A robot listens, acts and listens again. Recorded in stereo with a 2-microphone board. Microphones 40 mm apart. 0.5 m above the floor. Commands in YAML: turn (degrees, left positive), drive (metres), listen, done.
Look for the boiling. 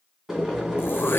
turn: -30
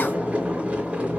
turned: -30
turn: -140
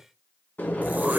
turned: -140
turn: 60
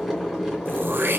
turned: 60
done: "Facing the boiling, 2 to 4 m away."